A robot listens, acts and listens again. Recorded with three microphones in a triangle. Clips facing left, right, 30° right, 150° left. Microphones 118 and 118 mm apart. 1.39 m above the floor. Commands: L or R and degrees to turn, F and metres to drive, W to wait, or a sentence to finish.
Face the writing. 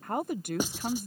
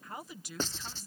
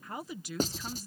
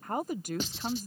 L15
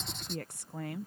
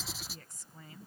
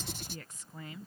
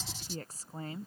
Facing the writing.